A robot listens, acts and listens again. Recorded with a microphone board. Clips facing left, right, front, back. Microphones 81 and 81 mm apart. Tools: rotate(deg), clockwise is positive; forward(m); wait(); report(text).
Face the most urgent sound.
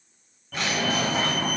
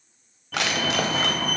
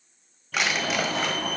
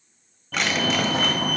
rotate(-180)
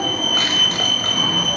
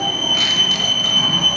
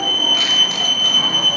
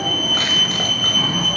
rotate(-40)
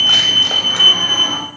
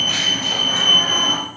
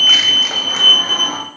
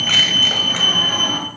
rotate(10)
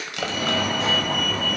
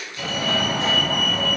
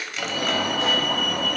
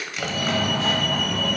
report("Found it: a fire alarm, straight ahead, 2 to 4 m away.")